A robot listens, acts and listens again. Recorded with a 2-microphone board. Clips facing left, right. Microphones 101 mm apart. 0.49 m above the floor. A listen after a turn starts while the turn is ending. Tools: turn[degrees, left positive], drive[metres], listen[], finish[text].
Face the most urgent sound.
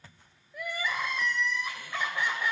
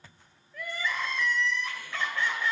Thought: The crying: about 15° left or 165° left.
Action: turn[15]
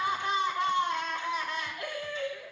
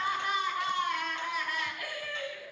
Thought: So it is at 150° left.
Action: turn[150]
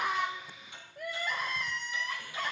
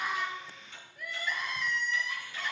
Thought: The crying is now 50° left.
Action: turn[50]
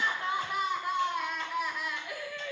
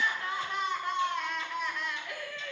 Thought: The crying is now 10° left.
Action: turn[10]
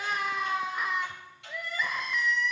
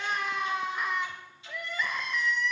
Action: finish[Facing the crying.]